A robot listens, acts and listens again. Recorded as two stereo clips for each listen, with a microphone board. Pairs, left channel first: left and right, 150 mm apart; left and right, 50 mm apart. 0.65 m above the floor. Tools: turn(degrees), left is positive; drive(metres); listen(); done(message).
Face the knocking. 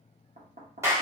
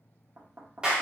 turn(degrees=-70)
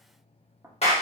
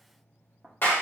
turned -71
turn(degrees=-15)
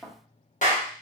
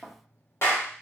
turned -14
done("Found it: knocking, straight ahead.")